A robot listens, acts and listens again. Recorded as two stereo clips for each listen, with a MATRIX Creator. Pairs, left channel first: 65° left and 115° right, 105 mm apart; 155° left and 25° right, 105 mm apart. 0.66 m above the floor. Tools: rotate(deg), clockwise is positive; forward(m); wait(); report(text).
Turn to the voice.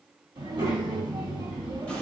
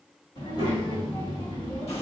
rotate(160)
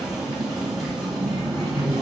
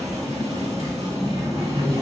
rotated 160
rotate(-30)
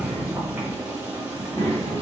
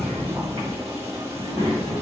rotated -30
rotate(-10)
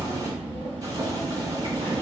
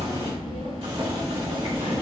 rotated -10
report("Facing the child speaking, 1 to 2 m away.")